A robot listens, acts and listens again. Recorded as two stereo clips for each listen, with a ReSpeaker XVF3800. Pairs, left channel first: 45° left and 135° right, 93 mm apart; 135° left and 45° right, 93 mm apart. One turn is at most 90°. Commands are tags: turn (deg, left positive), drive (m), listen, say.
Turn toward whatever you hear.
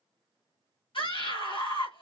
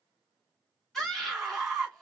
<turn deg="50"/>
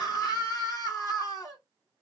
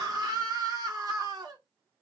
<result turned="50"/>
<say>Facing the scream.</say>